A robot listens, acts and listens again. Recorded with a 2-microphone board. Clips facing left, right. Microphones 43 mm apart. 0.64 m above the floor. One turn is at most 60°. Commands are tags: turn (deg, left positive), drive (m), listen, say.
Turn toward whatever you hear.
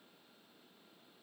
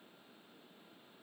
<listen/>
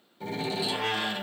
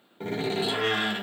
<turn deg="-45"/>
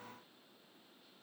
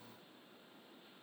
<listen/>
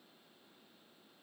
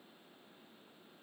<say>I heard a door slam, but can't make it out now. It was about straight ahead or 90° right.</say>